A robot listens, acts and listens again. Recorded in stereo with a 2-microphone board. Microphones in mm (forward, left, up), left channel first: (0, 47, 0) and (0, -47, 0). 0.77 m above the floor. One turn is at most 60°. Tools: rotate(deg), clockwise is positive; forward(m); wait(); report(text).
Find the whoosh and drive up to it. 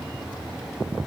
wait()
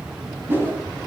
rotate(25)
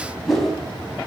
forward(1.0)
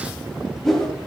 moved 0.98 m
forward(1.0)
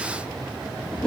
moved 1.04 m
rotate(-10)
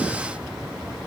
wait()
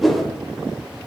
forward(1.0)
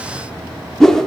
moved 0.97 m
forward(1.0)
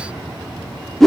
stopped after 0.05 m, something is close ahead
report("I am next to the whoosh.")